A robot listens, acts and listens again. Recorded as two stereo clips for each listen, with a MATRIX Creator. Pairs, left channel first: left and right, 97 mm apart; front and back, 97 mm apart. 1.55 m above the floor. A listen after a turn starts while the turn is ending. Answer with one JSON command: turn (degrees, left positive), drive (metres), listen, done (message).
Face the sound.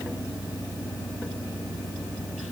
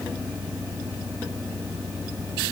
{"listen": true}
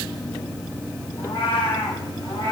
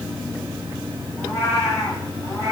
{"turn": 55}
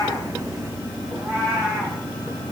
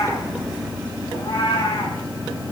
{"turn": -10}
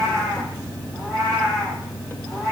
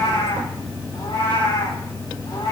{"done": "Found it: a cat meowing, straight ahead, over 4 m away."}